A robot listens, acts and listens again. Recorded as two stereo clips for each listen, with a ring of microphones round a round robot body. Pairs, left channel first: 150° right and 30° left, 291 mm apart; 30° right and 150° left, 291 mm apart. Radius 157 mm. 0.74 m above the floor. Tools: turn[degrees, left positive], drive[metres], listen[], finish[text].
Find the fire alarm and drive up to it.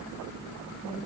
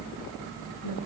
Action: listen[]
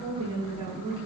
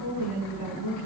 Action: listen[]
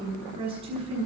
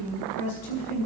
Action: finish[I can't make out a fire alarm, only a woman speaking.]